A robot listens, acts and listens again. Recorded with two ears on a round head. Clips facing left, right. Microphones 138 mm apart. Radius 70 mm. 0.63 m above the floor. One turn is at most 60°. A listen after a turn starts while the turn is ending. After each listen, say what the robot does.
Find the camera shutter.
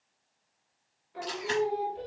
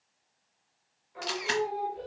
Turn 60° right.
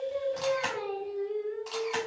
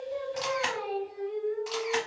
Facing the camera shutter.